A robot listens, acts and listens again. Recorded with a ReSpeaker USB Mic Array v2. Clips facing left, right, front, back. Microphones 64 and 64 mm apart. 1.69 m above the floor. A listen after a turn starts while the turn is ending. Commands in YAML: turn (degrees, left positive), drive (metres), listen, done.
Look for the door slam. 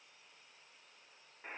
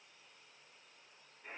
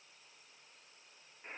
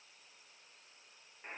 listen: true
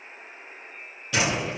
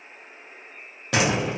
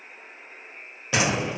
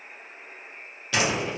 turn: -65
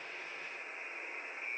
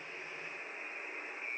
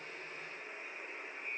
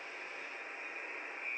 done: "I heard a door slam from this way, but can't make it out now."